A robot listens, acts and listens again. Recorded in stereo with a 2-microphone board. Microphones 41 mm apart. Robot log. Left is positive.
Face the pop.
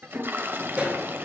note: The pop: about 30° right or 150° right.
cmd yaw -30
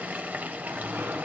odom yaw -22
cmd idle
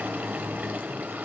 end: I heard a pop, but can't make it out now. It was about 10° right or 125° right.